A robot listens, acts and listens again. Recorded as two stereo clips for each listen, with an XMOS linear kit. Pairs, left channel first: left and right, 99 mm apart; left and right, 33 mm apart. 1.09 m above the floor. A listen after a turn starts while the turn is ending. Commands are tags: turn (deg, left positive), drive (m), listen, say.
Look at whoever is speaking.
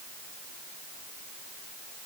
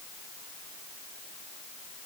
<listen/>
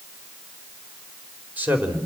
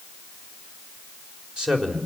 <turn deg="-15"/>
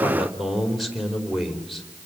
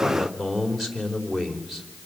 <say>Facing the man speaking.</say>